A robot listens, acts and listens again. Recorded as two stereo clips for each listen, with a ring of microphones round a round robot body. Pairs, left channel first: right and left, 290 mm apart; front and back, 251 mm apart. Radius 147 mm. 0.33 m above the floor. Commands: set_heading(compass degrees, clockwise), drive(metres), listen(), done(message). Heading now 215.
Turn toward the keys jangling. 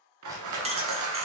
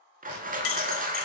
set_heading(190)
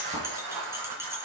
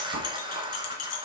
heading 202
set_heading(192)
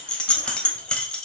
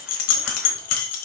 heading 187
done("Found it: keys jangling, straight ahead, 1 to 2 m away.")